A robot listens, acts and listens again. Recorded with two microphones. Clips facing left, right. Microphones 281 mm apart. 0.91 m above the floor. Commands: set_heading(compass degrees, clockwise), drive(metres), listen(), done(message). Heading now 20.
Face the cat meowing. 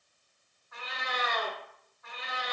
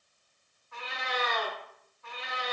set_heading(55)
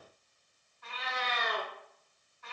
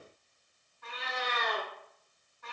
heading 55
set_heading(155)
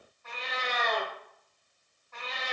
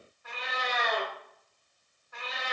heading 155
set_heading(165)
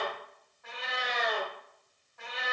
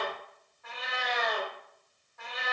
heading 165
done("Found it: a cat meowing, straight ahead, 1 to 2 m away.")